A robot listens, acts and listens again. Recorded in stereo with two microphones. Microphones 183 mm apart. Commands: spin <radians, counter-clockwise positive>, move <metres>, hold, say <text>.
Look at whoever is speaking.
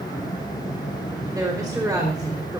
spin -0.35
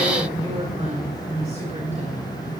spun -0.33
spin -2.44
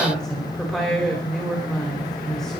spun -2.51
say Found it: a woman speaking, straight ahead.